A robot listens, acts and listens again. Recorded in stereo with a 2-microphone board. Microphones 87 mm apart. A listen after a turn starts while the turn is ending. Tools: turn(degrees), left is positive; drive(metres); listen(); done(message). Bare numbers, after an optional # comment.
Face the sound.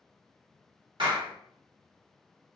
# The clap: about 65° right or 115° right.
turn(-65)
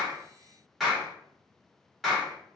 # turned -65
done("Found it: a clap, straight ahead.")